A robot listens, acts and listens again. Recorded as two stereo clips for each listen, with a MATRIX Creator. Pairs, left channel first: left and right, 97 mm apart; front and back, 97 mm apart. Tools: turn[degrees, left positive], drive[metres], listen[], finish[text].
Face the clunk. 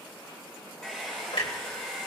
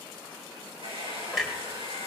Thought: The clunk: 90° left.
Action: turn[90]
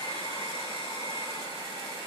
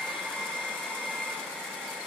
Action: finish[Facing where the clunk came from. I can't hear it now.]